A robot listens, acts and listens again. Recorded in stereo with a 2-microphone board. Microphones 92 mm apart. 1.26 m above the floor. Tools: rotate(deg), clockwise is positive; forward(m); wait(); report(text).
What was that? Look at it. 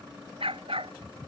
rotate(90)
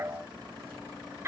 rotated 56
rotate(30)
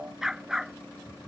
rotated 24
report("Found it: a dog barking, straight ahead.")